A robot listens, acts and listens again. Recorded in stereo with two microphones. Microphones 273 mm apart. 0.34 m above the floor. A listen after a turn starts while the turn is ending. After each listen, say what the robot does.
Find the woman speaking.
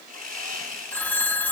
Keep listening.
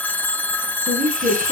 Turn 30° right.
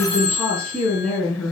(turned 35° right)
Found it: a woman speaking, straight ahead, over 4 m away.